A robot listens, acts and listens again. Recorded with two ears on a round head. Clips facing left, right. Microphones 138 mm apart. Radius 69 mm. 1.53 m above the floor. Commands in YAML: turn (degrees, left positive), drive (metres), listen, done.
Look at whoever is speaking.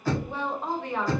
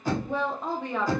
turn: -90
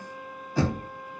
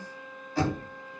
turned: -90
listen: true
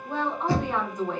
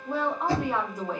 done: "Found it: a woman speaking, straight ahead, under 1 m away."